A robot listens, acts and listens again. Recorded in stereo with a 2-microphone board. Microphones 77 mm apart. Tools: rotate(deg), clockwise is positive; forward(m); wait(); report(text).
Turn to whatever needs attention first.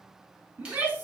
rotate(35)
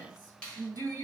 rotate(105)
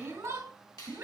rotate(40)
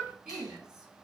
report("Found it: a shout, straight ahead.")